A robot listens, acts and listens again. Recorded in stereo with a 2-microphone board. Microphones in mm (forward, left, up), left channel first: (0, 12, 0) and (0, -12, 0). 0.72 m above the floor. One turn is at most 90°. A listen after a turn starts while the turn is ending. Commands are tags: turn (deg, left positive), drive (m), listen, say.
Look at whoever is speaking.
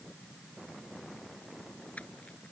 <listen/>
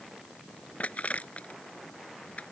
<listen/>
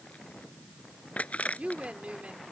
<turn deg="-65"/>
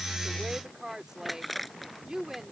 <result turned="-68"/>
<turn deg="-30"/>
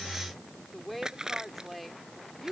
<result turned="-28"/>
<say>Found it: a woman speaking, straight ahead.</say>